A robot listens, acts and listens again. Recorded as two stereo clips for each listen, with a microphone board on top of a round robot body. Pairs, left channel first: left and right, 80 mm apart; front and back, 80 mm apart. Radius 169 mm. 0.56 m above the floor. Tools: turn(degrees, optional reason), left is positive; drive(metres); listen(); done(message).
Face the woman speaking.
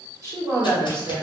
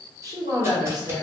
turn(degrees=-150, reason="The woman speaking: 150° right.")
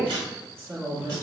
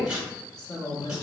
turn(degrees=-45, reason="The woman speaking is now 45° right.")
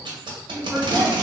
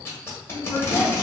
turn(degrees=-30, reason="The woman speaking is now 30° right.")
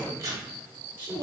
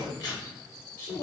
turn(degrees=-25, reason="The woman speaking is now 25° right.")
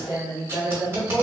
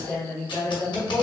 turn(degrees=-20, reason="The woman speaking is now 20° right.")
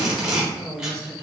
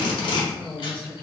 done("Facing the woman speaking.")